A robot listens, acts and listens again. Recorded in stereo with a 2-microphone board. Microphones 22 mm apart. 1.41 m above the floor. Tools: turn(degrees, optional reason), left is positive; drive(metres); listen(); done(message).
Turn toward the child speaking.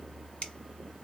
listen()
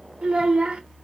turn(degrees=-45, reason="The child speaking: about 45° right or 135° right.")
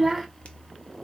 done("Found it: a child speaking, straight ahead.")